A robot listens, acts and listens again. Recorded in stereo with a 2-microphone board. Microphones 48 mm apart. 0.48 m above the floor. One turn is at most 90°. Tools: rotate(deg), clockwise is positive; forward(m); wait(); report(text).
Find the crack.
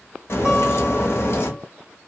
rotate(-60)
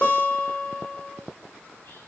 wait()
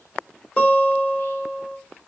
report("I heard a crack, but can't make it out now. It was about straight ahead or 60° left.")